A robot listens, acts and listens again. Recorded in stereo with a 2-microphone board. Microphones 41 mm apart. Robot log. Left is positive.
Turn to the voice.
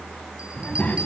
note: The child speaking: about 40° left or 140° left.
cmd yaw +40
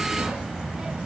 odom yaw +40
note: So it is at 20° right.
cmd yaw -20
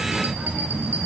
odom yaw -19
note: The child speaking is now 30° right.
cmd yaw -30
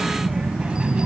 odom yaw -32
note: The child speaking is now 30° right.
cmd yaw -30
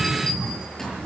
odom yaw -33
note: The child speaking is now 15° right.
cmd yaw -15
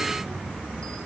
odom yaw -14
end: Found it: a child speaking, straight ahead.